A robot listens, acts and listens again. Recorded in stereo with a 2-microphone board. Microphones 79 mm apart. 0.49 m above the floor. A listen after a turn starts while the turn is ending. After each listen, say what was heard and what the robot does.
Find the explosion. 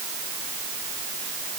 Keep listening.
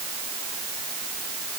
Keep listening.
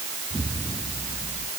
Turn 30° left.
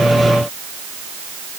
Keep listening.
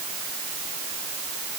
I heard an explosion, but can't make it out now. It was about 30° right or 150° left.